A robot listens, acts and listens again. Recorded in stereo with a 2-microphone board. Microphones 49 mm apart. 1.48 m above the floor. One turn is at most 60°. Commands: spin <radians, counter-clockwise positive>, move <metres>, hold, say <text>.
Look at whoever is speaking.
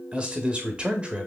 spin -0.44
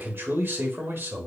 spin -1.05
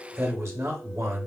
spin -1.05
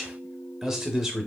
spin -0.17
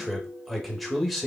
say Found it: a man speaking, straight ahead, under 1 m away.